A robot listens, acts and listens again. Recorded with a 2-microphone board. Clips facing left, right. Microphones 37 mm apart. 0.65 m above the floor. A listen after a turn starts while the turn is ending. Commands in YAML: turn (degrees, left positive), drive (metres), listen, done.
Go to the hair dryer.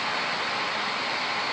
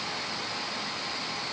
listen: true
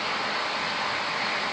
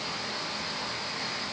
listen: true
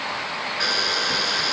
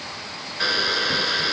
turn: -30
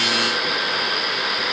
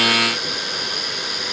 turn: 25
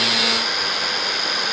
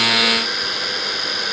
drive: 1.0
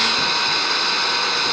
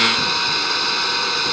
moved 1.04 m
drive: 1.0
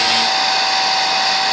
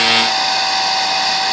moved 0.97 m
drive: 1.0
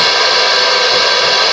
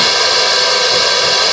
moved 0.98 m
turn: 15
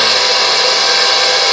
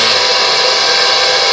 drive: 1.0
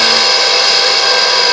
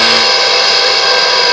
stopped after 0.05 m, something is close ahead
done: "Arrived at the hair dryer, straight ahead."